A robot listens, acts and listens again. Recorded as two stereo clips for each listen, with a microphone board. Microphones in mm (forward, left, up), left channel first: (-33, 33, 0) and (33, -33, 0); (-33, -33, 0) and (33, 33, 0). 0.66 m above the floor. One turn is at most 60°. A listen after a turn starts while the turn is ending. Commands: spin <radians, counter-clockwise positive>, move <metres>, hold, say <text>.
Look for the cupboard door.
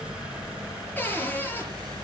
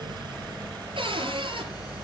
spin 1.05
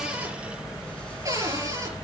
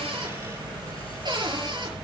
spin 0.17
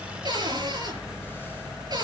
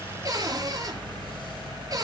say Found it: a cupboard door, straight ahead.